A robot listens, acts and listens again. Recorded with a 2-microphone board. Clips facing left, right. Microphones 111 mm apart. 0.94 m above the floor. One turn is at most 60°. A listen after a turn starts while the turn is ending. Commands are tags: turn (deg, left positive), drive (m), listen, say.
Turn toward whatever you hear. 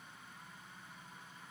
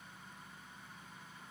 <listen/>
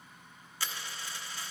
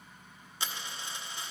<turn deg="-20"/>
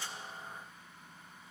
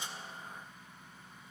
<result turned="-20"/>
<listen/>
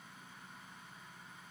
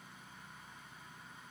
<say>I heard a dropped coin, but can't make it out now. It was about straight ahead or 140° right.</say>